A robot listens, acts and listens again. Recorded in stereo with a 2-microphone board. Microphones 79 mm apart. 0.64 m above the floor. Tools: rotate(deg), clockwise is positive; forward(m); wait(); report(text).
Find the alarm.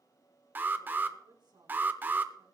rotate(25)
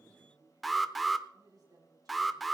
report("Found it: an alarm, straight ahead, 1 to 2 m away.")